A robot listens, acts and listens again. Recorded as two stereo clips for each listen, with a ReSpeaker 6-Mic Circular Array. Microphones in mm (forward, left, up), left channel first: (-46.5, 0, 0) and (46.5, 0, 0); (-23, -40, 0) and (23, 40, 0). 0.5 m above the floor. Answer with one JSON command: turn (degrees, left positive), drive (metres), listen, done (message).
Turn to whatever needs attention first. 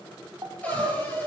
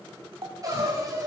{"turn": 35}
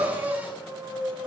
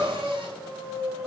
{"done": "Facing the crying, 2 to 4 m away."}